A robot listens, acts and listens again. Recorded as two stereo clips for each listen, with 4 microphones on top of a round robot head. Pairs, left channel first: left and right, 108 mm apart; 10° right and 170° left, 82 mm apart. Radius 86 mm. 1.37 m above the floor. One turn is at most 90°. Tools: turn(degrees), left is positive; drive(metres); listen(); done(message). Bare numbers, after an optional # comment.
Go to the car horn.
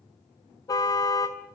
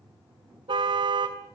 # The car horn: 145° left.
turn(90)
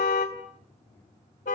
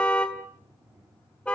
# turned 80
# The car horn is now 65° left.
turn(65)
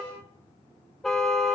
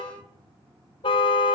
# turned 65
drive(1.0)
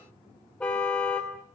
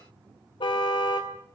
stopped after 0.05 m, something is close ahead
# The car horn is now 10° left.
turn(10)
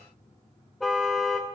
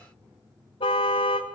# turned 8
done("Blocked. The car horn is further on, straight ahead.")